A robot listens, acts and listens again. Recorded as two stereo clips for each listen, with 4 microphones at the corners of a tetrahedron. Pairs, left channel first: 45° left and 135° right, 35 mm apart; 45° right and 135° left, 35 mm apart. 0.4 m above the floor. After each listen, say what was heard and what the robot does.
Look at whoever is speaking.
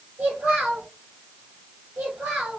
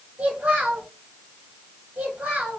The child speaking: 170° right. Turn 170° right.
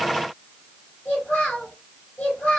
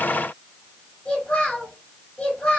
The child speaking is now 20° left. Turn 20° left.
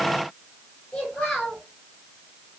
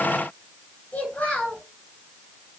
Facing the child speaking.